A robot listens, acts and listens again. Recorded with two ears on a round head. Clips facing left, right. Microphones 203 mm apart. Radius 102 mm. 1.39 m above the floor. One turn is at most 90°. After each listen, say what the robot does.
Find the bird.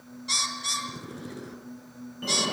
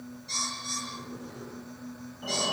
Turn 90° left.
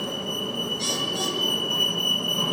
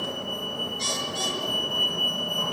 Keep listening.
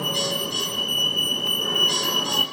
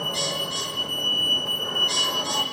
Keep listening.
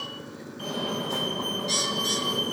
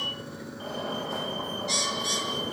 Facing the bird.